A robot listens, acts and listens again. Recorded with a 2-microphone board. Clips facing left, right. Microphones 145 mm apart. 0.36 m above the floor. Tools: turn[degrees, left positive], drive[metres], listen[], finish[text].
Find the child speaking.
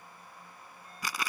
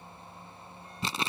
Action: listen[]
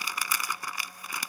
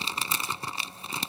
Action: listen[]
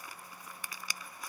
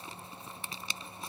Action: finish[I can't make out a child speaking, only crumpling.]